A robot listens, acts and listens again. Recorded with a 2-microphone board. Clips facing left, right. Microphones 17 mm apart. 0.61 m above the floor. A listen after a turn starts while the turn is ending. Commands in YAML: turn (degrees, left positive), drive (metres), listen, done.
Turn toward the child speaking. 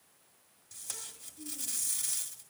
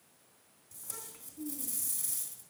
turn: -70
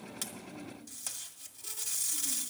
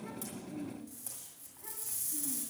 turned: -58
turn: -55
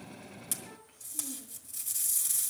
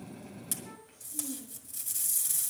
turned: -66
done: "Found it: a child speaking, straight ahead, 2 to 4 m away."